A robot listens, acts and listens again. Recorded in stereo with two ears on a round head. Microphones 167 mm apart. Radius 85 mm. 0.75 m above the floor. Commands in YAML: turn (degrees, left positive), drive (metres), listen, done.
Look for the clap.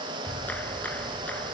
turn: 30
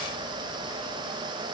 listen: true
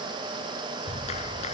turn: 145
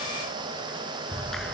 done: "Found it: a clap, straight ahead."